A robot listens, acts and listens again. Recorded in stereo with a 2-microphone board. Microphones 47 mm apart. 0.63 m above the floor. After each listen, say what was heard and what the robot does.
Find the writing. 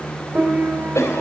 Keep listening.
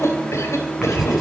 Turn 30° left.
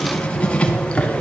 So it is at 155° left. Turn 155° left.
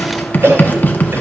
The writing is now 40° left. Turn 40° left.
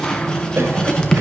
The writing is now 15° left. Turn 15° left.
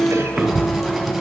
Facing the writing.